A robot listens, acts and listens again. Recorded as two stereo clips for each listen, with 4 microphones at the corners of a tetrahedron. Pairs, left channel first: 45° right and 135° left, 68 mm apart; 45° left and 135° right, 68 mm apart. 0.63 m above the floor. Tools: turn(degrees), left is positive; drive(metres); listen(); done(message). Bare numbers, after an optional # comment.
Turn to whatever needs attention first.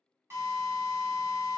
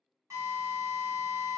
listen()
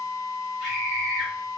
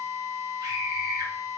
# The scream: 145° right.
turn(-145)
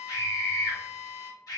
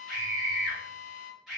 # The scream is now 50° right.
turn(-50)
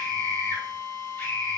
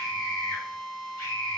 done("Facing the scream, 1 to 2 m away.")